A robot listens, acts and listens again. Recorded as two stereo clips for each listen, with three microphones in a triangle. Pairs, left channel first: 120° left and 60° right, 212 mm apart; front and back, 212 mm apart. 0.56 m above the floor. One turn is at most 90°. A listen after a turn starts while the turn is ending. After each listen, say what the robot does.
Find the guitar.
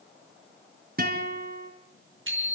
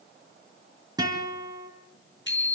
Turn 90° right.
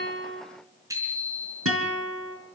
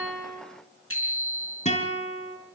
Turn 60° right.
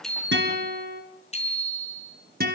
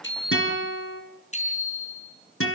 Turn 15° right.
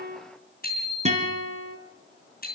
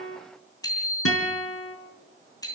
Found it: a guitar, straight ahead.